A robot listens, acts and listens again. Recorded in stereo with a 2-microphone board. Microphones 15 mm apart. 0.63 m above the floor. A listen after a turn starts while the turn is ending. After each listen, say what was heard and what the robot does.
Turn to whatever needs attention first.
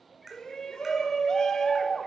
The shout: about 55° left or 125° left. Turn 55° left.
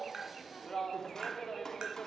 So it is at 55° left. Turn 55° left.
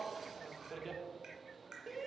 Facing the shout.